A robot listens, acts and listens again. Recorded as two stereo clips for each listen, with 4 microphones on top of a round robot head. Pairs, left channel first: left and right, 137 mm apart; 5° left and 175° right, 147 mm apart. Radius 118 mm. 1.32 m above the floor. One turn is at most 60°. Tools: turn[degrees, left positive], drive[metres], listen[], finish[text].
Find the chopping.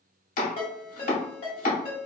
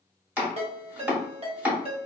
Thought: The chopping: 105° left.
Action: turn[60]
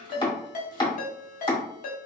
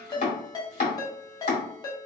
Thought: The chopping is now 35° left.
Action: turn[35]
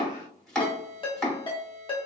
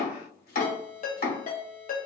Action: finish[Facing the chopping, 1 to 2 m away.]